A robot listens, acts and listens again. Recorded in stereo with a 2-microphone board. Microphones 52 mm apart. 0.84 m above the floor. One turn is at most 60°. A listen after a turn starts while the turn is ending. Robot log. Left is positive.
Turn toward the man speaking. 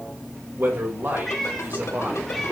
note: The man speaking: about 40° right or 140° right.
cmd yaw -40
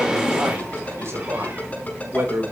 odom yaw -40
note: So it is at 120° right.
cmd yaw -60
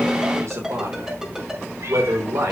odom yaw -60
note: The man speaking is now 75° right.
cmd yaw -60
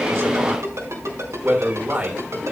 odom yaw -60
note: The man speaking is now 30° right.
cmd yaw -30
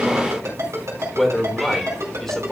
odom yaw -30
note: The man speaking is now 10° left.
cmd yaw +10
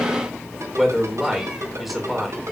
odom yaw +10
end: Found it: a man speaking, straight ahead, 2 to 4 m away.